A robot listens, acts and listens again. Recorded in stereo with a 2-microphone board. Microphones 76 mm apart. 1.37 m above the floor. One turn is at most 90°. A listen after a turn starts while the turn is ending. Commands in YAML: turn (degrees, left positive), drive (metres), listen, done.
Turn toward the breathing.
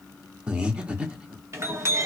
turn: -30
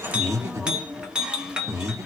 turn: -90
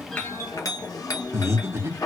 turn: -40
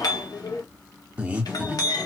turn: -20
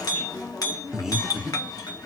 turn: -10
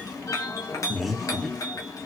done: "Facing the breathing."